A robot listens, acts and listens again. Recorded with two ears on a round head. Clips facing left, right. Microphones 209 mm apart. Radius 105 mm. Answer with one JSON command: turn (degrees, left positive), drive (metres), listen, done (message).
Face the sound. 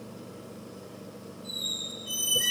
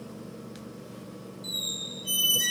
{"turn": -50}
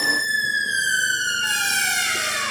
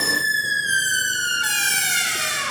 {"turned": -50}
{"turn": -60}
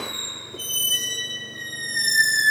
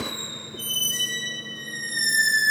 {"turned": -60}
{"done": "Facing the squeak, 1 to 2 m away."}